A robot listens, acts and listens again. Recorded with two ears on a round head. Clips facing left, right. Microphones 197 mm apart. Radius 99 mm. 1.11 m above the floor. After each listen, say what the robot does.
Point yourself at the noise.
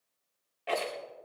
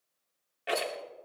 Turn 20° right.
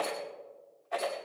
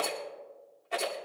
Turn 140° right.
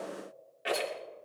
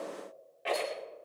Turn 20° left.
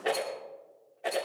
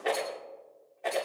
Facing the rattle.